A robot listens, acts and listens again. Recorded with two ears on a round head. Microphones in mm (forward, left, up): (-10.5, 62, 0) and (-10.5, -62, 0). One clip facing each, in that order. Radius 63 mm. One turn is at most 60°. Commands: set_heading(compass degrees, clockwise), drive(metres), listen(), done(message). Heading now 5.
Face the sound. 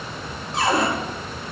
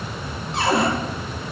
set_heading(35)
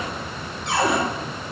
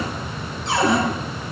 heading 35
set_heading(95)
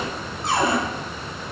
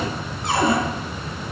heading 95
set_heading(145)
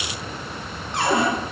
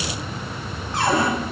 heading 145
set_heading(125)
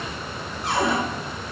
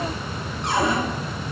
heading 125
done("Found it: a cupboard door, straight ahead, over 4 m away.")